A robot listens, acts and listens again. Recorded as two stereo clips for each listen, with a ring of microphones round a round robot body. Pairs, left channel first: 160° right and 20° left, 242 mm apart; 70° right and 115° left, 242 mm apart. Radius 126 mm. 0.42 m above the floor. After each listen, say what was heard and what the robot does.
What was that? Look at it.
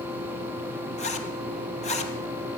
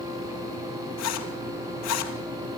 The zipper: 95° right. Turn 95° right.
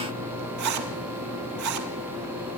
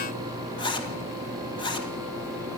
Facing the zipper, 2 to 4 m away.